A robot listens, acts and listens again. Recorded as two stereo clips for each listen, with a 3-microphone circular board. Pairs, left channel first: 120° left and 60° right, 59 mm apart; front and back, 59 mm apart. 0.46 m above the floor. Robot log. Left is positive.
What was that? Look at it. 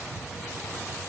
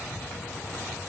cmd idle
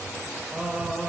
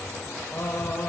end: Facing the singing, 1 to 2 m away.